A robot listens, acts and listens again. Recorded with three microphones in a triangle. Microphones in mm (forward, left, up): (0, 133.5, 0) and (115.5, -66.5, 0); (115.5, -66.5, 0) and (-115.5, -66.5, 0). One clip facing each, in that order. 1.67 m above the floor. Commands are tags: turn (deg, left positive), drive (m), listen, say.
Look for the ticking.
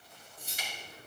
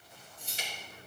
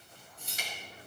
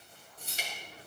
<turn deg="-120"/>
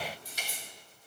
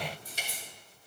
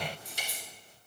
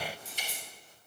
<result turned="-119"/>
<say>Found it: ticking, straight ahead, 2 to 4 m away.</say>